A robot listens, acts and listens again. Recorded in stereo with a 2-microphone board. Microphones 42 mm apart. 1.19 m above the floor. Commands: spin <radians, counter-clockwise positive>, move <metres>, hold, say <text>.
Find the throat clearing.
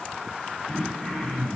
spin 0.26
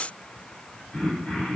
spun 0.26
spin 2.62
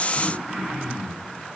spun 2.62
spin -0.17
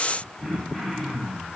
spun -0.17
say Found it: throat clearing, straight ahead.